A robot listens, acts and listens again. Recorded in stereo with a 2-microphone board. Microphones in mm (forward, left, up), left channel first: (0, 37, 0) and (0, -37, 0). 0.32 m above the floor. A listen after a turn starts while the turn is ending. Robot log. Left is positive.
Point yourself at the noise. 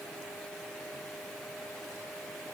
cmd idle
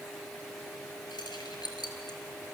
note: The keys jangling: about 75° left or 105° left.
cmd yaw +75
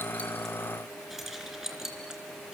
note: So it is at 10° right.
cmd yaw -10
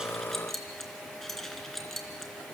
end: Found it: keys jangling, straight ahead.